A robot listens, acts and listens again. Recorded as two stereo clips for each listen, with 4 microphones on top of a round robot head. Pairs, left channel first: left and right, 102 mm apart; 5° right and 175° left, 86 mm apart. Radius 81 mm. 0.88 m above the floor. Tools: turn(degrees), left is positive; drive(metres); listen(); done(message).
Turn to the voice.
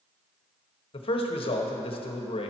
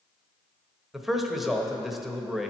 turn(degrees=90)
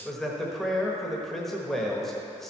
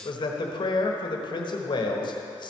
done("Found it: a man speaking, straight ahead.")